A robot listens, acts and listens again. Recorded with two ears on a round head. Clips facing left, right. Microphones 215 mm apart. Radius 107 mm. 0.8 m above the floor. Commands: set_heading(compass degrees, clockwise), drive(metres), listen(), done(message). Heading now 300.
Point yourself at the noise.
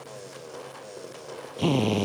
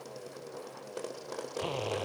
set_heading(235)
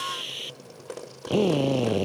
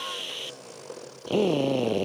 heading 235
done("Found it: a drill, straight ahead.")